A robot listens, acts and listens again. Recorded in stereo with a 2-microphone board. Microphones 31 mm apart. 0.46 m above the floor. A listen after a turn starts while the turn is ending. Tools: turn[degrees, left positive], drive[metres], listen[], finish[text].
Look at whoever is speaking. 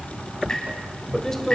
Thought: The man speaking: about 15° left or 165° left.
Action: turn[15]
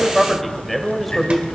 Action: finish[Facing the man speaking, 1 to 2 m away.]